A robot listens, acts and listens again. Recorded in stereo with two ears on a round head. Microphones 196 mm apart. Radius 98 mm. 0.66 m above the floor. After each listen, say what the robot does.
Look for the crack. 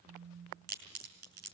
Turn 45° right.
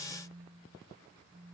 Keep listening.
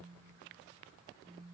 I heard a crack, but can't make it out now. It was about straight ahead or 90° right.